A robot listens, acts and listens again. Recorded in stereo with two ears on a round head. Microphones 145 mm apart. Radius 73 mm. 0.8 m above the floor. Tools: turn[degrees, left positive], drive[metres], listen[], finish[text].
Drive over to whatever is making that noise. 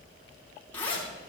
Action: turn[30]
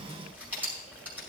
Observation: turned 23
Thought: So it is at 10° right.
Action: turn[-10]
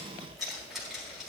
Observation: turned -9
Action: drive[1.0]
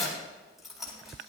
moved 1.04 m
Action: drive[1.0]
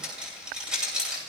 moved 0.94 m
Action: drive[1.0]
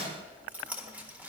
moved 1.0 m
Thought: The zipper is now 10° right.
Action: turn[-10]
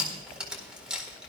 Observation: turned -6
Action: drive[1.0]
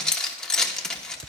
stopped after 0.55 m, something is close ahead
Action: finish[Arrived at the zipper, straight ahead.]